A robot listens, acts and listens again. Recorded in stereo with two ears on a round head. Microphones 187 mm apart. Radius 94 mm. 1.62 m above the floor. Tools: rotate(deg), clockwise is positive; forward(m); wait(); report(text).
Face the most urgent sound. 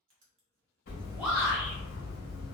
rotate(30)
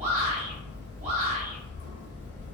rotate(145)
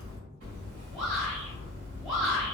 report("Facing the shout, 1 to 2 m away.")